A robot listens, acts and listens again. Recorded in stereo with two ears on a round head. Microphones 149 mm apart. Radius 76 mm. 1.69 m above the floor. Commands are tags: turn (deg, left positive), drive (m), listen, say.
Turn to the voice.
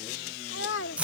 <turn deg="90"/>
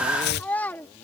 <turn deg="10"/>
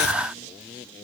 <listen/>
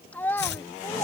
<turn deg="15"/>
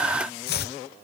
<listen/>
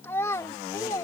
<turn deg="20"/>
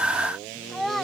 <say>Facing the child speaking.</say>